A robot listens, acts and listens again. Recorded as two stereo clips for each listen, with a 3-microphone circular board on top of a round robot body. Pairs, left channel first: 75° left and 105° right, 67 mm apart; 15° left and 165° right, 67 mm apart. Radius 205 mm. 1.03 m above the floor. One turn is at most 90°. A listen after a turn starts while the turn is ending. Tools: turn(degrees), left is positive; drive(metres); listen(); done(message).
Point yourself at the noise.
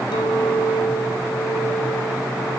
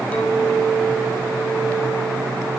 turn(degrees=85)
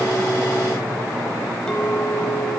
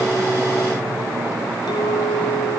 done("Facing the clink.")